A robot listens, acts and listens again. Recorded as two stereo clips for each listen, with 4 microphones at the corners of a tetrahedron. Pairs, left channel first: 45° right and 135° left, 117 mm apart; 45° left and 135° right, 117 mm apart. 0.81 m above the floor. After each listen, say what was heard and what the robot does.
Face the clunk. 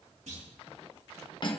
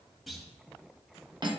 The clunk: 135° left. Turn 135° left.
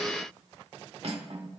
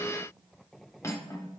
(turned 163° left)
Nothing new. It was at 25° right. Turn 25° right.
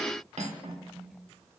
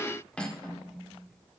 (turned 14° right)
Nothing new. It was at 15° right. Turn 15° right.
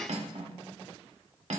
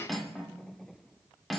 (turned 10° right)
I heard a clunk from this way, but can't make it out now.